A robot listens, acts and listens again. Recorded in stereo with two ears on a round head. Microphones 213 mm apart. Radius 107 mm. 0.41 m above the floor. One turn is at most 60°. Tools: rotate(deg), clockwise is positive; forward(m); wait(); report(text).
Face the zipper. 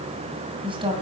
wait()
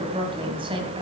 wait()
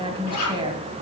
rotate(-60)
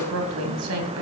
wait()
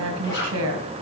rotate(-15)
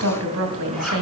wait()
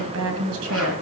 wait()
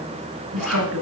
report("Found it: a zipper, straight ahead.")